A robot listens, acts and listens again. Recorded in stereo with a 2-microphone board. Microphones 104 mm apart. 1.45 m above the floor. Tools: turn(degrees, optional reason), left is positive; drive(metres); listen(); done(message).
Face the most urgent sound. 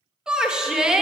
turn(degrees=-30)
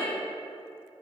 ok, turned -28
listen()
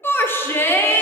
turn(degrees=20, reason="So it is at 20° left.")
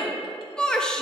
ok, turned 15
done("Found it: a shout, straight ahead, under 1 m away.")